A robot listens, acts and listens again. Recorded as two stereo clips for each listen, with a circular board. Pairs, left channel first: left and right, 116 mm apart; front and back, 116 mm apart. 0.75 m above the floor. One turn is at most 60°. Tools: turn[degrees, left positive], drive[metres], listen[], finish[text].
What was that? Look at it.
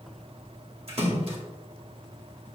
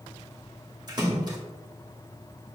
Thought: The splash: 125° right.
Action: turn[-60]
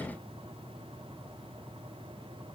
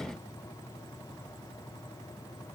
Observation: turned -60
Thought: Nothing new. It was at 65° right.
Action: turn[-60]
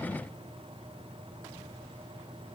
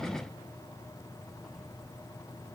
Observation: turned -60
Action: finish[I heard a splash from this way, but can't make it out now.]